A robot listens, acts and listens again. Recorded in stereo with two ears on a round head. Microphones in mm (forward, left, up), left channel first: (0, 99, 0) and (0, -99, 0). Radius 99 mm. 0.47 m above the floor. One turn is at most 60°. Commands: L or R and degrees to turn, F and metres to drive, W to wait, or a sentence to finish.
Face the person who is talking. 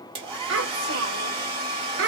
R55
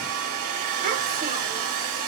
W
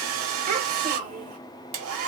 R45
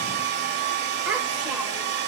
W
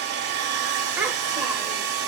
W
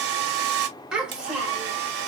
Facing the child speaking, 1 to 2 m away.